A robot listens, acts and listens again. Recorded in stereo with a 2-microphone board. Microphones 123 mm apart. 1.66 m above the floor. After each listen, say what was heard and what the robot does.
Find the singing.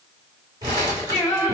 The singing: about 25° left or 155° left. Turn 25° left.
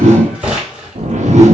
Keep listening.
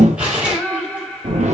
Found it: singing, straight ahead.